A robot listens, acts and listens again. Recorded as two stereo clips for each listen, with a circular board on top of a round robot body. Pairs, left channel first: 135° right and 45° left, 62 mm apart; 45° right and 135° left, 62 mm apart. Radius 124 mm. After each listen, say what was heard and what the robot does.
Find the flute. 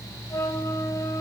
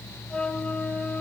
The flute: 120° right. Turn 120° right.
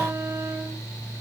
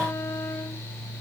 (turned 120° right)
Keep listening.
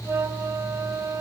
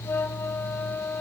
Facing the flute.